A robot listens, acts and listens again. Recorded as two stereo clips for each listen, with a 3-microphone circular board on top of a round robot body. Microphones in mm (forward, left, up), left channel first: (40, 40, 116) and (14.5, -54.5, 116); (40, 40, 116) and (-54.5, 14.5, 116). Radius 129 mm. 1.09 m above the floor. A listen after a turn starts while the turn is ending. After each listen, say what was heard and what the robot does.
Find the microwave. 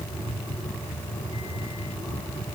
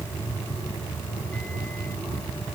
Keep listening.
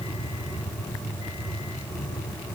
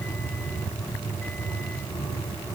Keep listening.
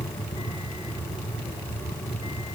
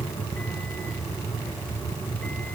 I can't make out a microwave.